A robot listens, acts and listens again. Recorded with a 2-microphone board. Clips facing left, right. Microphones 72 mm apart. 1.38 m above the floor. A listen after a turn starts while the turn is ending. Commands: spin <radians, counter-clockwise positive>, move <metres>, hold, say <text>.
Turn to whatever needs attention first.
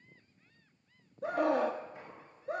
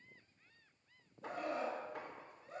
spin 1.57
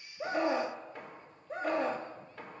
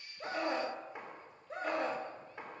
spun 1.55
say Found it: a scream, straight ahead.